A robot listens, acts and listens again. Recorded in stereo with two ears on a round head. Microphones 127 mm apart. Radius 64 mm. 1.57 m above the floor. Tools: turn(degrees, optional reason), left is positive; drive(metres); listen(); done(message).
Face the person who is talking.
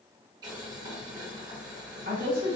turn(degrees=-55, reason="The woman speaking: about 55° right or 125° right.")
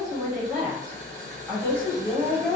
done("Found it: a woman speaking, straight ahead.")